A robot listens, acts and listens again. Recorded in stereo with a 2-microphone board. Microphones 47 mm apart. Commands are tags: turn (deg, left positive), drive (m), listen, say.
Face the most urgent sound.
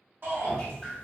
<turn deg="-55"/>
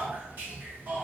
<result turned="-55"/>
<turn deg="-50"/>
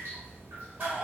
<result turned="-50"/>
<turn deg="-20"/>
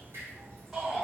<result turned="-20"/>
<say>Facing the shout.</say>